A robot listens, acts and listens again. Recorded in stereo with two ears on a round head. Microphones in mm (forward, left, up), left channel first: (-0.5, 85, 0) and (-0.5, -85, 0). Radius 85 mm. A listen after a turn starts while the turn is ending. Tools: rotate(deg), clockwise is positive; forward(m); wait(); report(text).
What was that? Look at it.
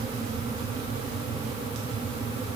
wait()
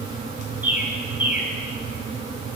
rotate(30)
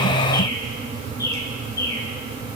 wait()
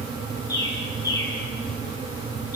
rotate(-20)
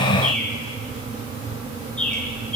report("Found it: a bird, straight ahead.")